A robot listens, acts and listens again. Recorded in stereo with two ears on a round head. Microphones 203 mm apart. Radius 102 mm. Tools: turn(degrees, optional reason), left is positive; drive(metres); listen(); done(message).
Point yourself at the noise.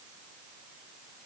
listen()
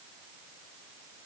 listen()
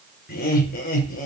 turn(degrees=35, reason="The laughter: about 35° left or 145° left.")
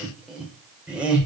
done("Found it: laughter, straight ahead, over 4 m away.")